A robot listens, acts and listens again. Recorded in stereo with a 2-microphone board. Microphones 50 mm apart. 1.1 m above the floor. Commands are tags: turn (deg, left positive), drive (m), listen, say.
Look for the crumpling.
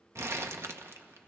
<turn deg="-65"/>
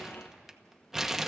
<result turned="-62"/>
<say>Found it: crumpling, straight ahead, 1 to 2 m away.</say>